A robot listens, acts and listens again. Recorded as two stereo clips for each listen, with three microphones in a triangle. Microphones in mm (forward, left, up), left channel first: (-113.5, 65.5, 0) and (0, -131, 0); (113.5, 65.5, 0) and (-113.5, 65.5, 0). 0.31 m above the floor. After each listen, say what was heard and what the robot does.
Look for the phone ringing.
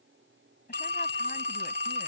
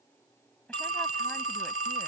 The phone ringing: 160° left. Turn 160° left.
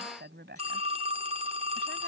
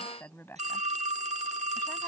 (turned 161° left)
Facing the phone ringing.